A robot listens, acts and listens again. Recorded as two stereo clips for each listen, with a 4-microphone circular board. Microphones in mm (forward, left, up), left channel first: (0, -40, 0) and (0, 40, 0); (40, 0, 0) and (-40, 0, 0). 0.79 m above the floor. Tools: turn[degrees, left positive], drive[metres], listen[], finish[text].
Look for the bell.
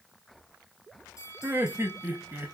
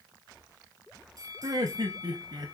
Thought: The bell: 140° right.
Action: turn[-140]
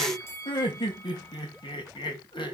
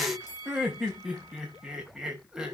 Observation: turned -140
Thought: The bell is now 35° right.
Action: turn[-35]
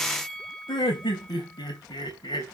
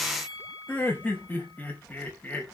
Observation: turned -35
Action: finish[Found it: a bell, straight ahead, 2 to 4 m away.]